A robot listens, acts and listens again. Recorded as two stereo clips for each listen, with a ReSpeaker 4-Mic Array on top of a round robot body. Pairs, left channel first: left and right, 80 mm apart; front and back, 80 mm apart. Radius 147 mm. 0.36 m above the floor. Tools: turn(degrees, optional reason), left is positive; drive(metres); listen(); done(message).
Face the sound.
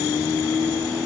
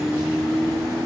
listen()
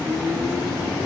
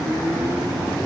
listen()
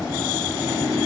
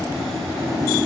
done("I can't make out anything to turn to.")